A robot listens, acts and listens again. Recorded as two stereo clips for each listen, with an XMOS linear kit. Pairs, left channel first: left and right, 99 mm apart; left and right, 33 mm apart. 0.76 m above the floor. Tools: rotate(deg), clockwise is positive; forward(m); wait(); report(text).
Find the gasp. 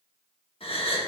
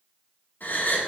rotate(-70)
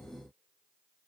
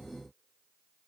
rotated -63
wait()
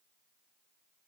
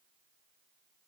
report("I heard a gasp, but can't make it out now. It was about 5° left or 45° left.")